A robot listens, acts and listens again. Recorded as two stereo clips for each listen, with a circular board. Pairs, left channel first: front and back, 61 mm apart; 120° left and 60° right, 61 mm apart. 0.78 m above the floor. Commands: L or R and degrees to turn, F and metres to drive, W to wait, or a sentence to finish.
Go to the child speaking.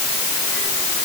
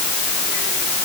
W
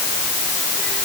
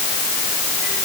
W
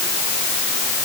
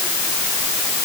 I can't make out a child speaking.